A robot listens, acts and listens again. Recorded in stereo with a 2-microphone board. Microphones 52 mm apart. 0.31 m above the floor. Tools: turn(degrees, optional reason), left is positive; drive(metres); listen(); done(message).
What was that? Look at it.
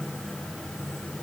listen()
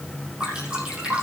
turn(degrees=-20, reason="The dripping: about 20° right or 160° right.")
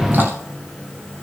listen()
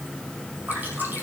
turn(degrees=-140, reason="So it is at 140° right.")
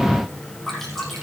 done("Facing the dripping.")